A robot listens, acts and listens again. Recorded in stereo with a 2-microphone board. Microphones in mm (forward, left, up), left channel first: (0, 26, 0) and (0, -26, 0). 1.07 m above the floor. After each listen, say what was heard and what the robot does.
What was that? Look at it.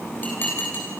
The dishes clattering: about 35° left or 145° left. Turn 35° left.
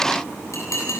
So it is at 110° left. Turn 110° left.
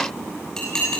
The dishes clattering is now 15° left. Turn 15° left.
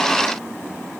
Keep listening.
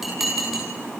Found it: dishes clattering, straight ahead.